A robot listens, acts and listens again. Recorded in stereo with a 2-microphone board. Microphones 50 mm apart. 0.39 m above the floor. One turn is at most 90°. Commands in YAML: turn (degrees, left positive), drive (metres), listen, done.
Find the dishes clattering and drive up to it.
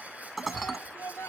turn: 30
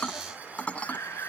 turn: 90
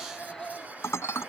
turn: 85
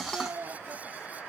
listen: true
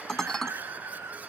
turn: 10
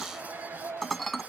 drive: 1.0
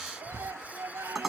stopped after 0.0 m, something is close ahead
done: "Something is in my way. I am facing the dishes clattering but have not reached it."